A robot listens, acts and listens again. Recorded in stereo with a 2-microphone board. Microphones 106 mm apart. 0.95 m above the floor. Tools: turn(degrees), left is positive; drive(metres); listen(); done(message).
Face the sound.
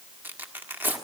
turn(degrees=-20)
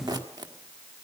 turn(degrees=-140)
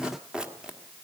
turn(degrees=-10)
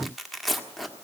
done("Facing the tearing paper.")